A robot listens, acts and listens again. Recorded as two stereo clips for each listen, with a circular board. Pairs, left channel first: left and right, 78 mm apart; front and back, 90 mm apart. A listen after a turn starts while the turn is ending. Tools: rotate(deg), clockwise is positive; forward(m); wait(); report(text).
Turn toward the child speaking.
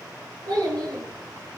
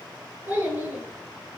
rotate(110)
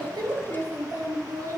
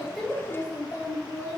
rotate(60)
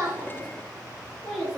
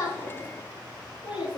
rotate(-10)
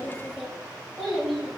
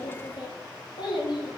report("Facing the child speaking.")